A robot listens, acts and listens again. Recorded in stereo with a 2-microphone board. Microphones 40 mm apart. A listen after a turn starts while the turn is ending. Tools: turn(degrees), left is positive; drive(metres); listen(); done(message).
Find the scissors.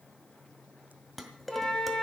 listen()
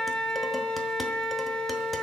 listen()
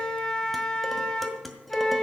done("I can't make out scissors, only a flute and dishes clattering.")